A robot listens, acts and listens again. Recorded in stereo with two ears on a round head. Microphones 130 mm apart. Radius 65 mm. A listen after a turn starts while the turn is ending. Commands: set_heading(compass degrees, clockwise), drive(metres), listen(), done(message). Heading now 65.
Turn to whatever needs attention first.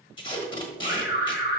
set_heading(355)
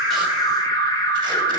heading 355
set_heading(330)
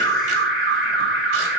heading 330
done("Facing the alarm, 1 to 2 m away.")